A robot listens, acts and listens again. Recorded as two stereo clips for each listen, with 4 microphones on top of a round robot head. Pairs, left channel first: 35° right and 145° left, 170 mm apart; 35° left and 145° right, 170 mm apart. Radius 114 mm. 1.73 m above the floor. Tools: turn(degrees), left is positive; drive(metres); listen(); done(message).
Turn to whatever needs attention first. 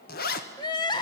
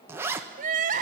turn(degrees=-100)
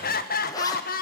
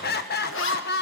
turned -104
done("Facing the crying, 1 to 2 m away.")